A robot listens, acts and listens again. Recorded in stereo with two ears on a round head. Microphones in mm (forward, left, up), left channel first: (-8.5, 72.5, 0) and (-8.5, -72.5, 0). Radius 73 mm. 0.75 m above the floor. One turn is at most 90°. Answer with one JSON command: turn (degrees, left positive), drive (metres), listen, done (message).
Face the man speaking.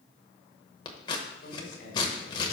{"turn": 60}
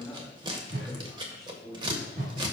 {"done": "Facing the man speaking."}